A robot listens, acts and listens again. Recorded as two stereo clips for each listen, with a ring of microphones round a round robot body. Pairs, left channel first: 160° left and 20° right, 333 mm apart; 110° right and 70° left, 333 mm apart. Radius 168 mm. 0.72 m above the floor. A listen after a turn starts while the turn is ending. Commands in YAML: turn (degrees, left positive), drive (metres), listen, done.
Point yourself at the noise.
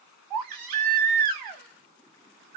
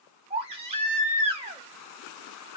done: "Facing the baby crying."